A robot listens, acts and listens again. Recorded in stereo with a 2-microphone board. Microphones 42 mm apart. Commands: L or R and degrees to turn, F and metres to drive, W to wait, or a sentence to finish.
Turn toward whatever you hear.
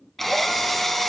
L30
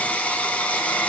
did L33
L140
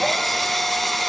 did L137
Facing the drill.